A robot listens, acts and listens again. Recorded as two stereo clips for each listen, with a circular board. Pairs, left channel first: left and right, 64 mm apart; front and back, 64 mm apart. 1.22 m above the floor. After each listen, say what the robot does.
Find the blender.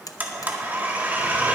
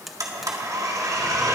Turn 150° right.
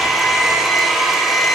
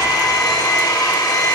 Found it: a blender, straight ahead.